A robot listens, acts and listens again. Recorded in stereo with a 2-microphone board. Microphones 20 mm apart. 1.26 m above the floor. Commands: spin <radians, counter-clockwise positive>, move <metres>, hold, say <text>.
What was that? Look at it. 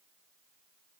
hold
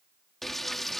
spin 0.52
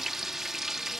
spin -0.35
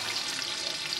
spin -0.17
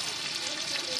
say Facing the frying.